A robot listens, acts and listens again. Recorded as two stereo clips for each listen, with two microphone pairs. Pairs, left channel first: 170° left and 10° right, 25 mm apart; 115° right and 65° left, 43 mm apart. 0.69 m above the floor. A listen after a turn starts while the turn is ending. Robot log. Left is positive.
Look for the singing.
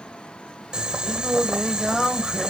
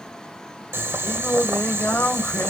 note: The singing: 105° right.
cmd yaw -105
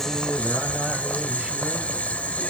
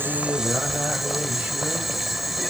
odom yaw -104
cmd idle
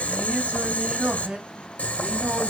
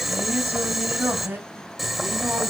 note: The singing is now 25° left.
cmd yaw +25
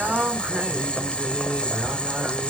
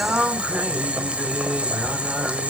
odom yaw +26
end: Found it: singing, straight ahead, over 4 m away.